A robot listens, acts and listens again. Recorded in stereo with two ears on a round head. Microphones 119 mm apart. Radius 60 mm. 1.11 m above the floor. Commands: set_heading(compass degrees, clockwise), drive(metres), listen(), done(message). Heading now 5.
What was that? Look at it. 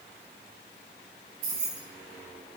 set_heading(95)
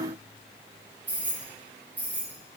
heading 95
set_heading(105)
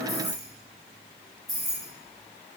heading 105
done("Facing the keys jangling.")